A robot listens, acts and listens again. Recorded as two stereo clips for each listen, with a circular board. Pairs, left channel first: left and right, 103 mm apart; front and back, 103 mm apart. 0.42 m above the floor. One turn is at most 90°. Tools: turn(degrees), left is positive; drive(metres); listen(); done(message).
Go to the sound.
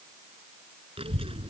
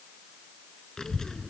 turn(degrees=-85)
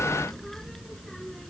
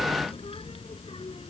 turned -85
drive(metres=1.0)
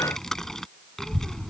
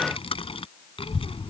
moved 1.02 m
drive(metres=1.0)
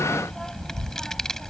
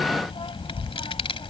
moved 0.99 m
drive(metres=1.0)
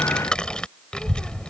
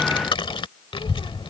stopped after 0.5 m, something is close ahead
turn(degrees=10)
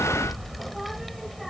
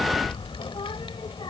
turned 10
done("Arrived at the child speaking, straight ahead.")